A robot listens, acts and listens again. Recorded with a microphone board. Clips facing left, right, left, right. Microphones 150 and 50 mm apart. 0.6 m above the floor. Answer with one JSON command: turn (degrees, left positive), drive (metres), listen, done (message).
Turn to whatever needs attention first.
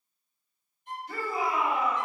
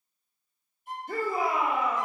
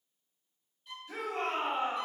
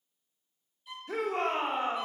{"turn": -50}
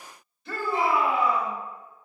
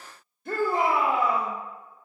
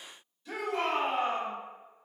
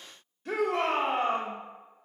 {"turn": -65}
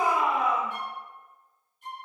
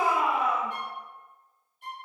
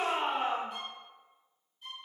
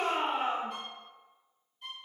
{"done": "Facing the shout, 1 to 2 m away."}